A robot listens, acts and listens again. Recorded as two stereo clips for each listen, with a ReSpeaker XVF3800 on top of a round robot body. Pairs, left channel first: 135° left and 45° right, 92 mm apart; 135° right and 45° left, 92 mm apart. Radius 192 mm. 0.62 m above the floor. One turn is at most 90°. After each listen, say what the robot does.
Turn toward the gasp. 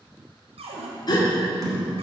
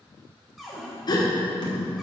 Turn 90° left.
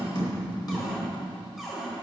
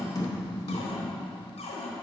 Turn 90° left.
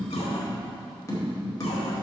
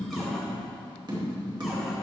I heard a gasp from this way, but can't make it out now.